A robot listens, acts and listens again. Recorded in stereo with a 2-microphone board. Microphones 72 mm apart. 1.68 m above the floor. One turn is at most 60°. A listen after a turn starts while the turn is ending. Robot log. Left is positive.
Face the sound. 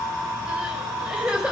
cmd yaw -30
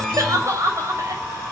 note: So it is at 135° right.
cmd yaw -60
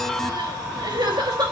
note: The crying is now 80° right.
cmd yaw -60
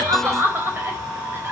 note: The crying is now 30° right.
cmd yaw -30
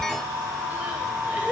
cmd idle
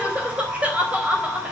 note: The crying is now 20° right.
cmd yaw -20
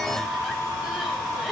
cmd idle
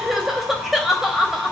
end: Facing the crying.